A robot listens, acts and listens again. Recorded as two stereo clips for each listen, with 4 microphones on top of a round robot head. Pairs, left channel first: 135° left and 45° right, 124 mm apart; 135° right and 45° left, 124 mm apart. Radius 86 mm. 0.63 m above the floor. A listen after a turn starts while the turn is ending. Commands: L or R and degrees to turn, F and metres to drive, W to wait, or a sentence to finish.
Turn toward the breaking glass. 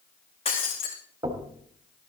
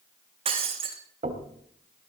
L90
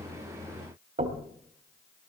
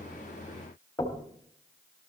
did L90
Facing where the breaking glass came from. I can't hear it now.